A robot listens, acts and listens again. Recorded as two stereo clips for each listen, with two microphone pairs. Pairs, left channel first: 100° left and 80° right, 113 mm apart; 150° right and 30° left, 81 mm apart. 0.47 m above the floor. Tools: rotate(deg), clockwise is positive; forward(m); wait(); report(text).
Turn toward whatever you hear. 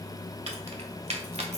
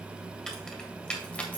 rotate(85)
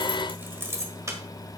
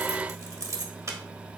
rotate(20)
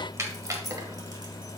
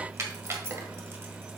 rotate(25)
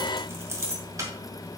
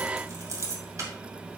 rotate(20)
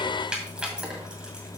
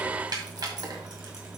report("Found it: keys jangling, straight ahead.")